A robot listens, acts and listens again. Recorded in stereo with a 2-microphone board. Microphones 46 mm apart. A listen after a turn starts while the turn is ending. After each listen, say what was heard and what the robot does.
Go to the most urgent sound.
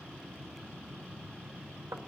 Keep listening.
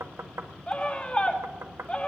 The scream: about 30° left or 150° left. Turn 30° left.
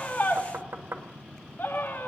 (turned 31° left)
So it is at 120° left. Turn 120° left.
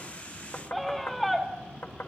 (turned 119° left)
Drive 1.0 m forward.
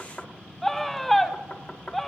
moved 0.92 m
Drive 1.0 m forward.
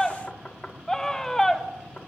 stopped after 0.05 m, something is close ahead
The scream is now 10° left. Turn 10° left.
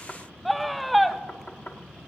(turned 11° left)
I am next to the scream.